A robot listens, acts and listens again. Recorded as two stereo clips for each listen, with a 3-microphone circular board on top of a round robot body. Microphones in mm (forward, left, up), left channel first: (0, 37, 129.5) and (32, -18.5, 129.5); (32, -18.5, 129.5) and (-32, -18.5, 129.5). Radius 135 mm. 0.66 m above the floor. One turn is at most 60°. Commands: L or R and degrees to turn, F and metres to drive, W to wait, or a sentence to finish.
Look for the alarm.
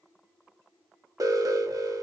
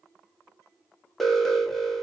R60
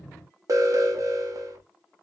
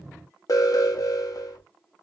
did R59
R30
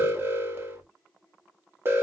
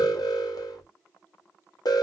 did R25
Found it: an alarm, straight ahead.